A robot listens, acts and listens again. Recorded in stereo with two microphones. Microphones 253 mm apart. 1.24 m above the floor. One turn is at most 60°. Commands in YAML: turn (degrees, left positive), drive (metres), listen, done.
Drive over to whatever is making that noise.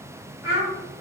turn: -60
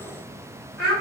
drive: 1.0
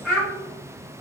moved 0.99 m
drive: 1.0
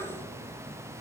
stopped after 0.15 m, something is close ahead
listen: true
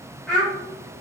done: "Arrived at the child speaking, straight ahead."